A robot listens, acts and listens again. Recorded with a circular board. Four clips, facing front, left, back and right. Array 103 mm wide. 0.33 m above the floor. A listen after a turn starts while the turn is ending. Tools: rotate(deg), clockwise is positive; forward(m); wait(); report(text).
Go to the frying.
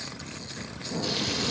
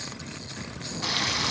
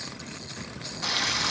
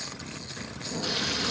rotate(-130)
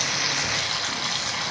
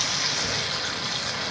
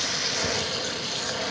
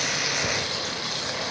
forward(1.0)
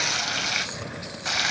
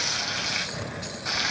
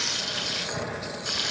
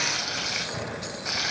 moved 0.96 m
forward(1.0)
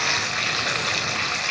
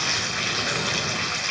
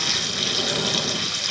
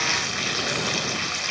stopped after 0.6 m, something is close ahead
report("I am next to the frying.")